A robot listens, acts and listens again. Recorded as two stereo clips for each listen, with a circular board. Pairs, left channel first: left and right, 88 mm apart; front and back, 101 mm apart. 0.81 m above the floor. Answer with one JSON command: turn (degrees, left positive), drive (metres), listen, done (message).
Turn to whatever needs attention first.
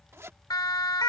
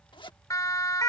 {"turn": 55}
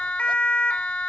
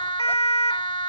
{"turn": 15}
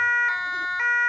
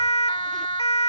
{"done": "Facing the siren."}